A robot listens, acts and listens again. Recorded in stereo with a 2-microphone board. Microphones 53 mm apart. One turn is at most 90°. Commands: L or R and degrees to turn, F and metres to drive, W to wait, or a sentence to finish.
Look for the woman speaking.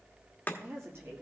R45
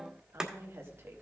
R50
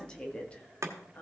L30
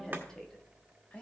L20
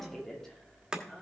L10
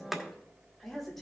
Facing the woman speaking, 2 to 4 m away.